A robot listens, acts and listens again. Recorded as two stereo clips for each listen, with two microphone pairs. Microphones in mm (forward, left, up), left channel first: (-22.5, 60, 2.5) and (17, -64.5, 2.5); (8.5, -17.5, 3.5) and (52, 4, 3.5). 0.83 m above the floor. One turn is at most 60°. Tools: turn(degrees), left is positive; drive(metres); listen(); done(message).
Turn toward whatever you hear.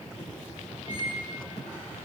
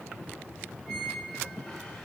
turn(degrees=60)
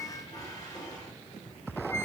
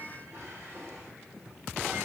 turn(degrees=45)
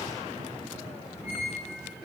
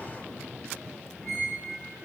turn(degrees=-10)
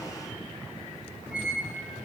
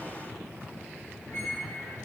done("Found it: a squeak, straight ahead.")